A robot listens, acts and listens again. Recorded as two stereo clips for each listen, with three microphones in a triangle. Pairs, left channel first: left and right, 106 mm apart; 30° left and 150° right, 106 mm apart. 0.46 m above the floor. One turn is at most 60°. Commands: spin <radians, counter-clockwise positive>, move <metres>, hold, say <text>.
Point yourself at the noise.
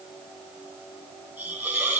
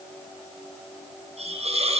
spin -1.05
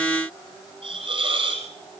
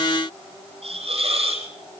spin -1.05
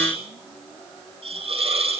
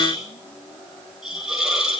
spin -1.05
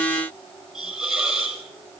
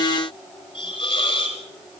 spin -0.17
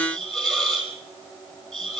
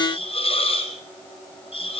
say Found it: a hiss, straight ahead.